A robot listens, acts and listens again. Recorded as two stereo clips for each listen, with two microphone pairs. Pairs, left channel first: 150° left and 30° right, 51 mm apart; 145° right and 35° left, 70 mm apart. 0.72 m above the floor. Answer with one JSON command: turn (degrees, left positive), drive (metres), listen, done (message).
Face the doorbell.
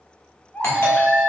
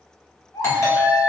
{"turn": 175}
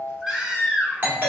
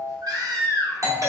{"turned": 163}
{"turn": 15}
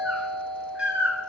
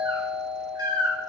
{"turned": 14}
{"done": "Found it: a doorbell, straight ahead."}